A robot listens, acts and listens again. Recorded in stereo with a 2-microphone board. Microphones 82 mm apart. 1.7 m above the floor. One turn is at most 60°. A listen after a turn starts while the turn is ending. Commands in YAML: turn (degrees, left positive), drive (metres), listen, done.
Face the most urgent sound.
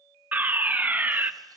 turn: -20
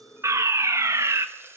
turn: -60
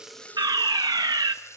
turn: -60
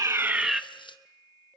done: "Facing the fire alarm, under 1 m away."